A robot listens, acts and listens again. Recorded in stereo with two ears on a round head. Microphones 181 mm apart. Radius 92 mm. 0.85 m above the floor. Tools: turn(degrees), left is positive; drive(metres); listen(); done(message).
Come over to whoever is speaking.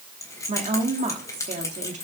turn(degrees=-35)
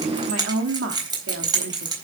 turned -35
turn(degrees=-105)
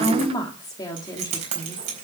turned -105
turn(degrees=20)
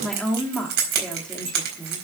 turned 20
drive(metres=1.0)
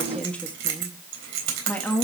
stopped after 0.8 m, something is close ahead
turn(degrees=10)
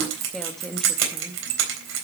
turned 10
done("I am next to the woman speaking.")